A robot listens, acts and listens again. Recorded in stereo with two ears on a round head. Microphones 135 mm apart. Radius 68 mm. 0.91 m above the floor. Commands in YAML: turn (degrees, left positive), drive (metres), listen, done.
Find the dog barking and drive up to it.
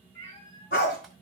turn: 65
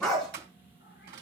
drive: 1.0
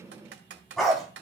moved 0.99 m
drive: 1.0
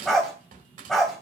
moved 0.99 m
drive: 1.0
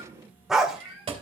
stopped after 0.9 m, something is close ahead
done: "Arrived at the dog barking, straight ahead."